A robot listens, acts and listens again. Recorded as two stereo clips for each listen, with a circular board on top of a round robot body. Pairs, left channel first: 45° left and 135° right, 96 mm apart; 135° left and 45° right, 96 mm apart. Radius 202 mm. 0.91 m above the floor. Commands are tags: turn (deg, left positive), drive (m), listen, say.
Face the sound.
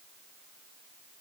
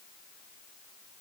<listen/>
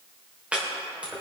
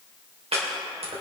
<turn deg="-55"/>
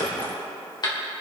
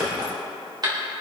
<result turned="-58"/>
<say>Facing the chopping.</say>